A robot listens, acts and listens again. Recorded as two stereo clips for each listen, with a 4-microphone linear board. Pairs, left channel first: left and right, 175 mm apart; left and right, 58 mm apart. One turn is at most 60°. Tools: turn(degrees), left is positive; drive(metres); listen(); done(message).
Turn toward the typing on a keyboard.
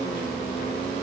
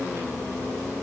listen()
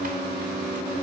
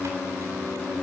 listen()
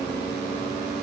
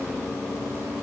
done("I can't make out typing on a keyboard to turn to.")